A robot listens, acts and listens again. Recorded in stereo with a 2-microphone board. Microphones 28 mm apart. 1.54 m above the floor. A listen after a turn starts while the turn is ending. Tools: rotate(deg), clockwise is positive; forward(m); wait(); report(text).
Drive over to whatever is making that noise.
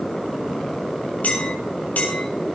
rotate(-70)
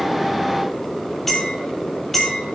forward(1.0)
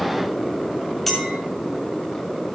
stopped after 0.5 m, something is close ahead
report("Something is in my way. I am facing the clink but have not reached it.")